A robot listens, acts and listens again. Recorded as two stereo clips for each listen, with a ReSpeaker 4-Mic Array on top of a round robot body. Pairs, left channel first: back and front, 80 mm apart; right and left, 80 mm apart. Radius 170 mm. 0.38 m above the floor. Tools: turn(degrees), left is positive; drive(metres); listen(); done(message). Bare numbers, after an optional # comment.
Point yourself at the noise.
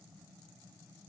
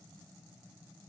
listen()
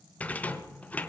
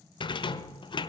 # The rattle: 105° right.
turn(-105)
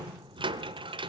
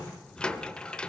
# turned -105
# The rattle is now 10° right.
turn(-10)
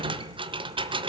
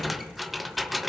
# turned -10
done("Found it: a rattle, straight ahead.")